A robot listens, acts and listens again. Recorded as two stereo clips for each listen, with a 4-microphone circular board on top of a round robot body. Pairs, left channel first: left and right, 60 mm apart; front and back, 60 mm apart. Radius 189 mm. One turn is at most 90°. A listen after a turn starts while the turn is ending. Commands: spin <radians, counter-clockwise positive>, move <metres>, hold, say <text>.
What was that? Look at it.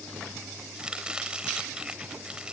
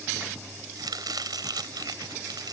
spin -1.57
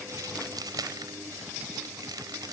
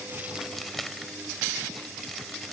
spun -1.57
spin -1.48
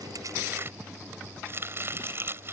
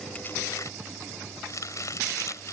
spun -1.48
spin -0.70
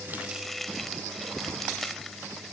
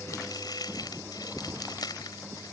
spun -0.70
say Found it: chopping, straight ahead.